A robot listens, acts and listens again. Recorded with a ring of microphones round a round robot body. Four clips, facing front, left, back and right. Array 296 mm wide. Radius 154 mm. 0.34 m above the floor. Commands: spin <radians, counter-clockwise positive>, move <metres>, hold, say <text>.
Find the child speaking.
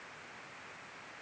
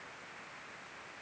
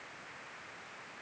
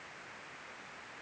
hold
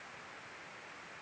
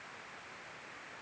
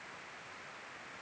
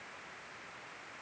hold
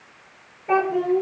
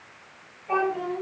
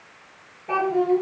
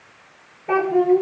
spin -1.31
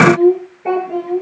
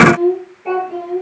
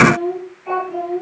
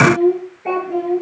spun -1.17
spin -0.26
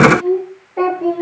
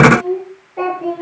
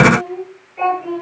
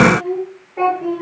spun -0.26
say Found it: a child speaking, straight ahead.